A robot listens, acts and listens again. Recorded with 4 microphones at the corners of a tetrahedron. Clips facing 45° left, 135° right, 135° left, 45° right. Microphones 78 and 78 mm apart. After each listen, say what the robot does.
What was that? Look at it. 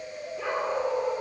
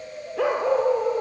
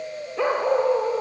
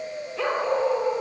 Turn 155° right.
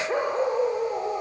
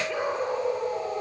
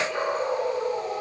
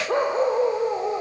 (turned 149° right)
Facing the dog barking, over 4 m away.